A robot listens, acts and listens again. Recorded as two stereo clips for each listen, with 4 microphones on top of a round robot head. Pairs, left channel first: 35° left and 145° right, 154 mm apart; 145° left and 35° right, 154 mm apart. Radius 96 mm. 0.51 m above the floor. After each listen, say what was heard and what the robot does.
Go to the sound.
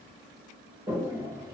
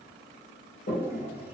The toilet flushing: 150° left. Turn 150° left.
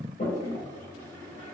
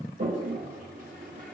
Drive 1.0 m forward.
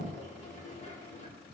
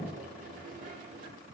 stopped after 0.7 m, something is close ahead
Something is in my way. I am facing the toilet flushing but have not reached it.